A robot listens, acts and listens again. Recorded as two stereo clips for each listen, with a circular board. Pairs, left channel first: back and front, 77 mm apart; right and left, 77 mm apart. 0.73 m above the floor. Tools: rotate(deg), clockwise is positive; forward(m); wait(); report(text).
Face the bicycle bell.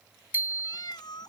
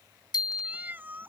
rotate(65)
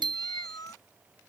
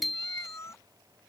report("Found it: a bicycle bell, straight ahead.")